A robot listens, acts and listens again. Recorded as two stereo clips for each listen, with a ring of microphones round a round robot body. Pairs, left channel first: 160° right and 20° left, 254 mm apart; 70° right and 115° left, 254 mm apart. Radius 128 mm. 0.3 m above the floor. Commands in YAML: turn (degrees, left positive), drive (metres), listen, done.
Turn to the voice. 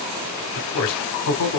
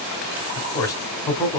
turn: -150
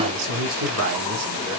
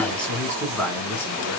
turn: 15
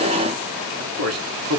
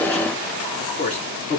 done: "Facing the man speaking."